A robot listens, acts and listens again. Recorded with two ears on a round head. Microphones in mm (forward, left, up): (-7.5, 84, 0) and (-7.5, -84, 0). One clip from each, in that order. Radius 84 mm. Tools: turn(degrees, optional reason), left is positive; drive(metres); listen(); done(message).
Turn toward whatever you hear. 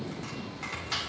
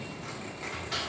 turn(degrees=20, reason="The chopping: about 20° left or 160° left.")
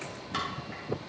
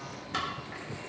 done("Found it: chopping, straight ahead.")